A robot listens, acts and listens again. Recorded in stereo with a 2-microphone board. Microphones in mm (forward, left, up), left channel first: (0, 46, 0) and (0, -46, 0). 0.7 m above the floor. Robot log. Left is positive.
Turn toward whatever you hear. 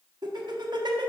note: The laughter: about 55° right or 125° right.
cmd yaw -55
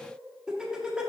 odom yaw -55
note: So it is at 10° right.
cmd yaw -10
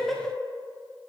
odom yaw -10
end: Found it: laughter, straight ahead, 1 to 2 m away.